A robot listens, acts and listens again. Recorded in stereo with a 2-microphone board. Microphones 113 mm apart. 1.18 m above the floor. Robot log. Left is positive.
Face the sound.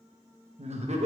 note: The laughter: about 75° right or 105° right.
cmd yaw -75
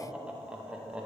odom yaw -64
note: So it is at 10° right.
cmd yaw -10
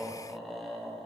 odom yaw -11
end: Found it: laughter, straight ahead.